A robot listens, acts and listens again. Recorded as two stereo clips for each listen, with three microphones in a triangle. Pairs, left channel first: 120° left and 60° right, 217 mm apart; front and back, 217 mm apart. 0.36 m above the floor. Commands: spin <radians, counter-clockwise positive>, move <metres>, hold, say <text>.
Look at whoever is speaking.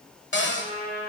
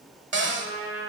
hold
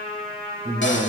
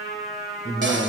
say Facing the man speaking, 1 to 2 m away.